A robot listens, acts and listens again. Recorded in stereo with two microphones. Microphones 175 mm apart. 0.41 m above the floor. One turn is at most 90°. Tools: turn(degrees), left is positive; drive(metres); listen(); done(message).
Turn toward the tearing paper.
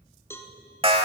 listen()
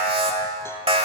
listen()
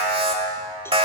done("I can't make out tearing paper, only an alarm and a cowbell.")